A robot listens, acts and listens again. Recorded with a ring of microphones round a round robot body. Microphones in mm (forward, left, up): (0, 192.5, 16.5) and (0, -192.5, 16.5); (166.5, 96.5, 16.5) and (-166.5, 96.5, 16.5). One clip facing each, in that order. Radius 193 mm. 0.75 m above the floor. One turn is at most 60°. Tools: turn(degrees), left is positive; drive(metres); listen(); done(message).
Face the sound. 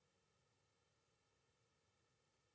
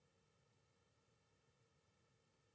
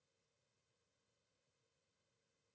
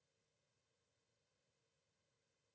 listen()
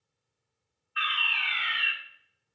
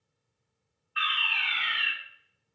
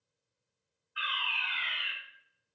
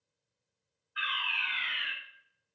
turn(degrees=-60)
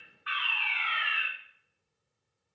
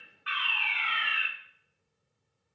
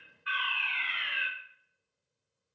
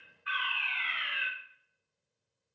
turn(degrees=-50)
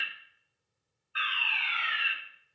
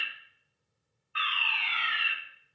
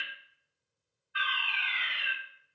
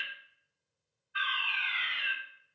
turn(degrees=-10)
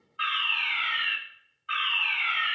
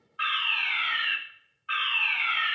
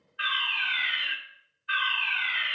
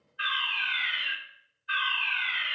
done("Found it: a fire alarm, straight ahead.")